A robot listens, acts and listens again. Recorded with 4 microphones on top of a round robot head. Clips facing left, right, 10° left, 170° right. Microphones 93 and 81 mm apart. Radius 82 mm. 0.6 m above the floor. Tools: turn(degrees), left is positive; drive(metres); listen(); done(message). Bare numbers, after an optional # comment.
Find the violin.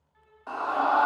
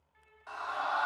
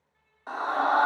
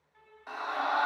# The violin: 160° left.
turn(160)
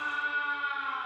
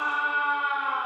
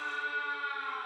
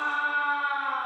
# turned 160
listen()
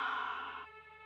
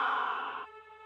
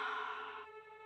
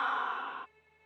# The violin is now 30° right.
turn(-30)
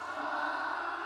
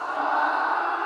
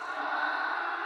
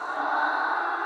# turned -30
listen()
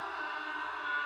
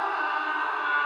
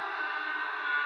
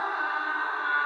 listen()
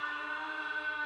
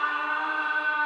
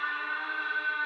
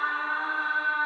done("Facing where the violin came from. I can't hear it now.")